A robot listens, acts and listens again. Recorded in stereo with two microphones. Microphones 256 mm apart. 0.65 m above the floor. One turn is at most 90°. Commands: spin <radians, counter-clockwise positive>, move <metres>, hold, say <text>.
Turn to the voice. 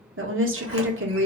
spin -0.96
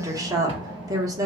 spin -0.26
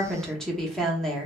say Found it: a woman speaking, straight ahead, under 1 m away.